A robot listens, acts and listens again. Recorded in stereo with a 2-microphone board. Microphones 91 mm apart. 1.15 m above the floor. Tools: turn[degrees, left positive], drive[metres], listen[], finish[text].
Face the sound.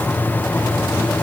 Action: listen[]
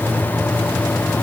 Action: listen[]
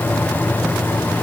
Action: finish[I can't make out anything to turn to.]